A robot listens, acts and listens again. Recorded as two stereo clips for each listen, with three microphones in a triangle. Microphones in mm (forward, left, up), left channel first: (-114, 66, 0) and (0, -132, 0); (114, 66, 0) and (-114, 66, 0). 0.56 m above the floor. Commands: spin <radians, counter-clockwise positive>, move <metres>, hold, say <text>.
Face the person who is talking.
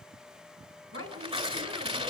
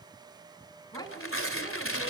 spin -1.22
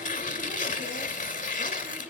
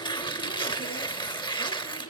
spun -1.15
hold
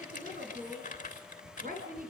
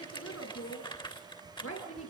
spin -0.17
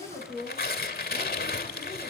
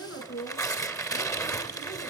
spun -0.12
say Facing the woman speaking, over 4 m away.